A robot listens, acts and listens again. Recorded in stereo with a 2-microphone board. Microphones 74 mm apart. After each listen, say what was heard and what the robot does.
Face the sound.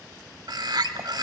The bird: about 65° right or 115° right. Turn 65° right.
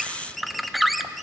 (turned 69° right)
Facing the bird.